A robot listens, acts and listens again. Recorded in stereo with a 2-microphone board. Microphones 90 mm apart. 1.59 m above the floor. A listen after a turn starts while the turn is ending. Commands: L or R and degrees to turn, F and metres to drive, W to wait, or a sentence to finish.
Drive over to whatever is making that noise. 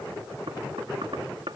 R90
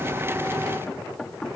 L10
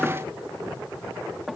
F1.0
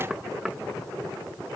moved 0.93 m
F1.0
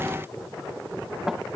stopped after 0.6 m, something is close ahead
Arrived at the knocking, straight ahead.